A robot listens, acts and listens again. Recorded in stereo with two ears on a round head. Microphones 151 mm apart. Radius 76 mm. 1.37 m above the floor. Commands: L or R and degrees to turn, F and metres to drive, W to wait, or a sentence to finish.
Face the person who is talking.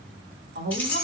R65
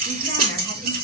W
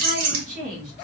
R50
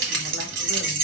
W
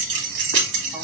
W
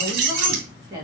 R25
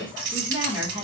R15
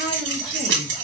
W
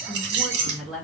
Found it: a woman speaking, straight ahead.